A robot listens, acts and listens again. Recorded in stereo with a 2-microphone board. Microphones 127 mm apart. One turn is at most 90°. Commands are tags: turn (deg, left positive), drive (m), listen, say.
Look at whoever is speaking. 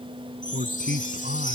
<turn deg="-90"/>
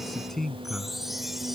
<say>Found it: a man speaking, straight ahead.</say>